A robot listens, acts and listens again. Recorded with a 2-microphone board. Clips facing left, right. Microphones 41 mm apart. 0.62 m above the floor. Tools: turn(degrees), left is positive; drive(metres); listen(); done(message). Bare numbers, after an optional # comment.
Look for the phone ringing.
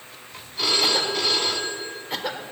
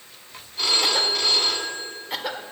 turn(30)
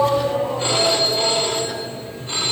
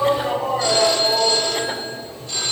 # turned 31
# So it is at 150° left.
turn(150)
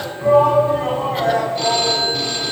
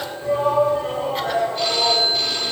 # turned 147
done("Found it: a phone ringing, straight ahead.")